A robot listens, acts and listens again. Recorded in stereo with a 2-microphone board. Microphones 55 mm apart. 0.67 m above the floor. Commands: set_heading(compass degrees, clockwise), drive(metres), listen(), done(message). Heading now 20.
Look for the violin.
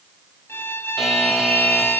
set_heading(335)
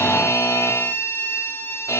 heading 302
set_heading(252)
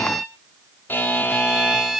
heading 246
done("Found it: a violin, straight ahead, 1 to 2 m away.")